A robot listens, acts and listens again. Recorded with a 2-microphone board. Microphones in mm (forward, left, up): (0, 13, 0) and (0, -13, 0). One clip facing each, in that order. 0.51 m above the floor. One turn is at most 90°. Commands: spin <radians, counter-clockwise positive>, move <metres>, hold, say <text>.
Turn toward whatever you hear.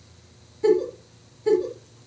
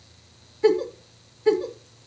spin -0.52
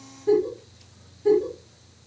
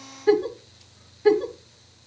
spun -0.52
spin -1.57
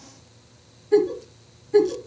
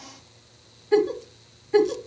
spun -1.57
spin -0.44
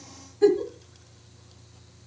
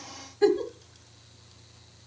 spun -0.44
spin -0.26
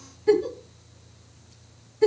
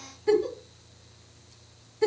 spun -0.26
say Found it: a giggle, straight ahead, 1 to 2 m away.